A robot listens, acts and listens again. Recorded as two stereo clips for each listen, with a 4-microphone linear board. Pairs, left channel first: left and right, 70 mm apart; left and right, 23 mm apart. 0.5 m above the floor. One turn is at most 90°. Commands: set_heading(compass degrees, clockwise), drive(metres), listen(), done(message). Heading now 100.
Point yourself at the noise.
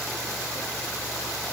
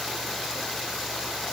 listen()
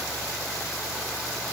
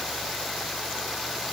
listen()
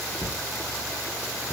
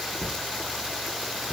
set_heading(30)
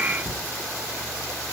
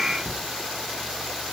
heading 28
done("Facing the cupboard door, 2 to 4 m away.")